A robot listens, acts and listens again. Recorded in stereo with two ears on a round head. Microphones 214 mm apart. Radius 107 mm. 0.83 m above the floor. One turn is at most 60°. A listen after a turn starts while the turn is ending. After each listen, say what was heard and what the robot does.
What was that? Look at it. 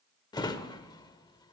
The drawer: about 20° left or 160° left. Turn 20° left.
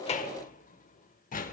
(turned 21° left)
So it is at 135° left. Turn 60° left.
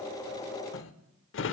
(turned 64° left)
The drawer is now 75° left. Turn 60° left.
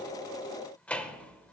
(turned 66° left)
Facing the drawer.